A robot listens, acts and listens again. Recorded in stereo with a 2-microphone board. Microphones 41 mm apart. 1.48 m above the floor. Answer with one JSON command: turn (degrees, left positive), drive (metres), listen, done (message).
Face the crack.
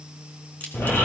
{"turn": 50}
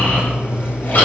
{"listen": true}
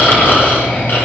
{"done": "I heard a crack, but can't make it out now. It was about straight ahead or 80° left."}